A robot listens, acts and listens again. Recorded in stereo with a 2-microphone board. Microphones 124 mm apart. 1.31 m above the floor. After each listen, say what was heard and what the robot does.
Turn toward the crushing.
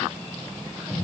Keep listening.
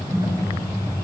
Keep listening.
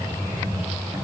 I can't make out crushing to turn to.